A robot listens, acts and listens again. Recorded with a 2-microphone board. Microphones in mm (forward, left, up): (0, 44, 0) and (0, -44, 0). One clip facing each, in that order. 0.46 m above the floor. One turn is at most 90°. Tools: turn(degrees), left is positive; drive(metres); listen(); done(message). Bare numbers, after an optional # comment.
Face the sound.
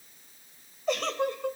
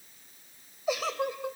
turn(-30)
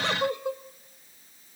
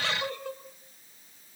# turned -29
# So it is at 20° left.
turn(20)
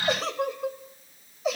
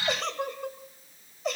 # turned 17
done("Found it: a giggle, straight ahead.")